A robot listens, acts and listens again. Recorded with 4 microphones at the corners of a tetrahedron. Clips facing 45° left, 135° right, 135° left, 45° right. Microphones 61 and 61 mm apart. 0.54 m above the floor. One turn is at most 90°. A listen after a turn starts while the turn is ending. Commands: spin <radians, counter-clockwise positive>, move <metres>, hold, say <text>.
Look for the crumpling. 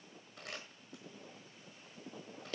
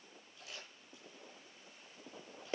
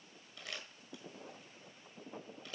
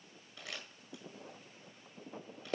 spin 0.44
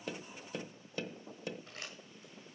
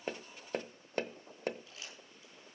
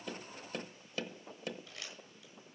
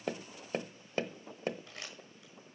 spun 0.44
say Facing the crumpling.